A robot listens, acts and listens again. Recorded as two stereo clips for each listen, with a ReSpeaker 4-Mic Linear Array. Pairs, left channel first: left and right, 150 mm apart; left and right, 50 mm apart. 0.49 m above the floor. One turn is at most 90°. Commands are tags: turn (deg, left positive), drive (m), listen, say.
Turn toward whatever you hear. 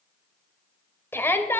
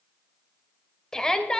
<turn deg="30"/>
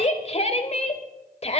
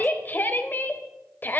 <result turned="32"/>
<turn deg="90"/>
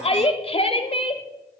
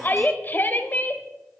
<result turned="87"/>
<turn deg="45"/>
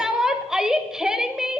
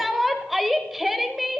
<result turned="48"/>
<say>Facing the shout, 1 to 2 m away.</say>